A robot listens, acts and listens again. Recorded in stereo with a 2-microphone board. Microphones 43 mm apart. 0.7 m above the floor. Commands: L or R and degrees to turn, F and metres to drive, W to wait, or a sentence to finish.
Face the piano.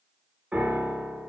R30
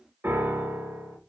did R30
R120
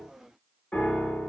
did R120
L25
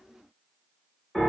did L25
Facing the piano.